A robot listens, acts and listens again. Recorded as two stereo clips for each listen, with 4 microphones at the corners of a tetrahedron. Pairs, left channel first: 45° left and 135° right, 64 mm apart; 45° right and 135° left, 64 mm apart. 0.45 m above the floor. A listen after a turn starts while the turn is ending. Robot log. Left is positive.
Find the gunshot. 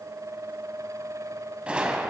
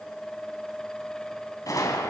note: The gunshot: 65° right.
cmd yaw -65
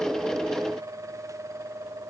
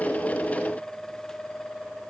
end: Facing where the gunshot came from. I can't hear it now.